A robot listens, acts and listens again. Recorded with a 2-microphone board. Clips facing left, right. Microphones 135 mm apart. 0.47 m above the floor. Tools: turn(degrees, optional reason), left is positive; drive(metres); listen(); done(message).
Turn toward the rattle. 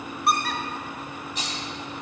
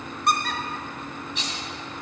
turn(degrees=40, reason="The rattle: about 40° left or 140° left.")
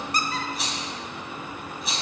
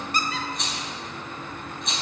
done("Found it: a rattle, straight ahead, 2 to 4 m away.")